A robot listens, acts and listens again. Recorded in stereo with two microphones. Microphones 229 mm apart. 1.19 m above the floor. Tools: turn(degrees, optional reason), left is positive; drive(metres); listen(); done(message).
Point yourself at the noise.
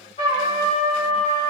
turn(degrees=25, reason="The trumpet: about 25° left or 155° left.")
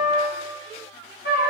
turn(degrees=125, reason="So it is at 125° left.")
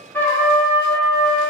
turn(degrees=10, reason="The trumpet is now 10° left.")
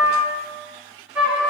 done("Facing the trumpet.")